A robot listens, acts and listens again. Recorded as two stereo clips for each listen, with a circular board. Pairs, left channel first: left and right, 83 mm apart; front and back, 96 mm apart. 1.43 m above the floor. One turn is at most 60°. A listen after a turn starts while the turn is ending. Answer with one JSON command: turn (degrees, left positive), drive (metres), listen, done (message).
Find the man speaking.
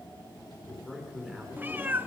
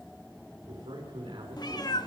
{"turn": 60}
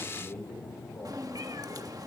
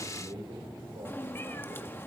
{"turn": 60}
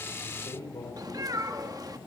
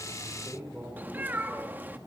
{"turn": 60}
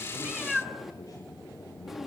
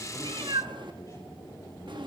{"turn": 45}
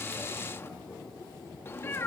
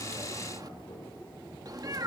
{"listen": true}
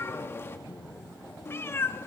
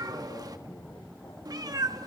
{"done": "Facing where the man speaking came from. I can't hear it now."}